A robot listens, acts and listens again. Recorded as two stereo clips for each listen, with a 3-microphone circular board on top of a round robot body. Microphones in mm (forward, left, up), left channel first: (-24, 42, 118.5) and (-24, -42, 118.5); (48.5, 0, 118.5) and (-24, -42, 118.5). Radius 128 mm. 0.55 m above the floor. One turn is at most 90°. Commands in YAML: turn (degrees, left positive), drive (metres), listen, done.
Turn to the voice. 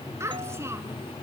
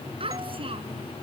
turn: -90
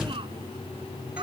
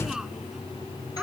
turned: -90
turn: -70
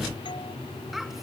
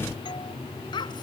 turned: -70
done: "Found it: a child speaking, straight ahead."